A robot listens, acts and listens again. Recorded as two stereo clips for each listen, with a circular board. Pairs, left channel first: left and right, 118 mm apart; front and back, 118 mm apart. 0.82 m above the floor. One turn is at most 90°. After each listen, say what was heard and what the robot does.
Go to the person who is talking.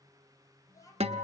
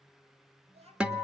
The child speaking: 150° left. Turn 90° left.
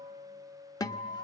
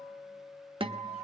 Nothing new. It was at 60° left. Turn 60° left.
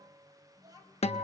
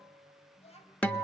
The child speaking is now 30° right. Turn 30° right.
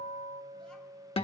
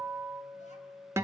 Keep listening.
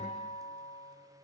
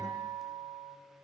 Keep listening.
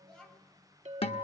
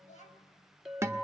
Drive 1.0 m forward.
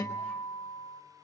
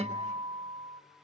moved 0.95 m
Keep listening.
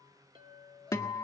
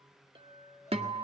Keep listening.
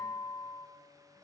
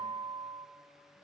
I heard a child speaking from this way, but can't make it out now. I did not reach it.